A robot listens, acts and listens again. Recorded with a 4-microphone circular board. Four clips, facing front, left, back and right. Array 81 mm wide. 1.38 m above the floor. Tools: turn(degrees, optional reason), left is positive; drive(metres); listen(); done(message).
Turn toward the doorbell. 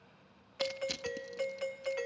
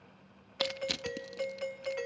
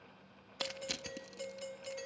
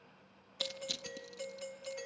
turn(degrees=45, reason="The doorbell: 45° left.")
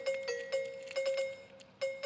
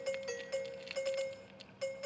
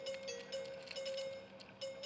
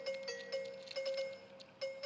turn(degrees=15, reason="The doorbell is now 15° left.")
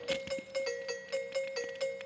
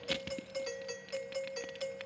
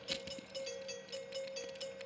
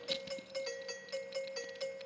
done("Found it: a doorbell, straight ahead.")